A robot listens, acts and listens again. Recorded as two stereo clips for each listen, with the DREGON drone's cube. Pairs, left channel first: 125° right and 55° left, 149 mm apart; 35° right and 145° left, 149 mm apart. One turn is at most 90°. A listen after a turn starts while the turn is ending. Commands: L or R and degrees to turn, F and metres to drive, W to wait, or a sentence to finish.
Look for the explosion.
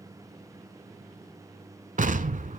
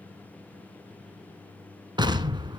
L85
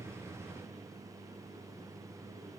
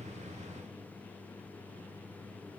Facing where the explosion came from. I can't hear it now.